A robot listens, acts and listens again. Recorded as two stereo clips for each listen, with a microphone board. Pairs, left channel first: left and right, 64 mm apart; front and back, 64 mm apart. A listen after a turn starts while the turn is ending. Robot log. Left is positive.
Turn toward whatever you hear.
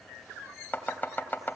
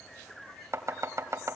note: The chopping: 150° left.
cmd yaw +150
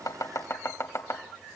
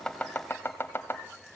note: The chopping is now 50° left.
cmd yaw +50
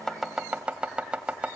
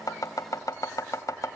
note: The chopping is now 15° right.
cmd yaw -15
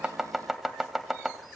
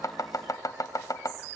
end: Facing the chopping, 2 to 4 m away.